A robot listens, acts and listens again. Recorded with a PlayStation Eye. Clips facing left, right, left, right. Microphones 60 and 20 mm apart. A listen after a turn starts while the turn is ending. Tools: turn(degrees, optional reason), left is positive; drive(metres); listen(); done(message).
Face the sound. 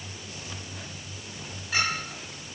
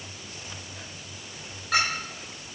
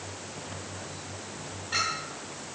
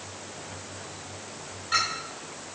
turn(degrees=-70, reason="The clink: about 70° right or 110° right.")
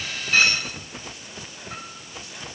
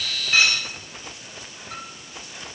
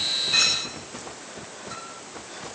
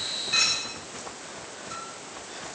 done("Found it: a clink, straight ahead.")